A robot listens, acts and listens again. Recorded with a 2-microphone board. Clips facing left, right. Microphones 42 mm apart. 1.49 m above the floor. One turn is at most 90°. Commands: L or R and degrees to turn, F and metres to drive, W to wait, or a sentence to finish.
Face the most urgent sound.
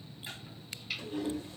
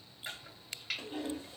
W
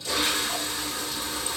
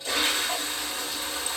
W
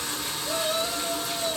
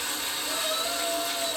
L15
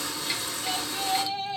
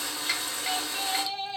Found it: a shout, straight ahead.